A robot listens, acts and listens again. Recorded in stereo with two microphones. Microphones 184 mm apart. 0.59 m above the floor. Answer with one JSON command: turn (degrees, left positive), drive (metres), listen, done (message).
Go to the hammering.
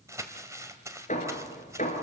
{"turn": 45}
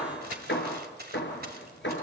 {"turn": 90}
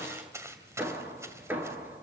{"turn": -10}
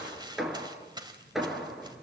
{"drive": 1.0}
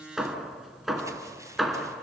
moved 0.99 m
{"drive": 1.0}
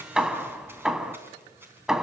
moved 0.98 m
{"drive": 1.0}
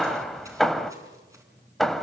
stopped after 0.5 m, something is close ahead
{"done": "I am next to the hammering."}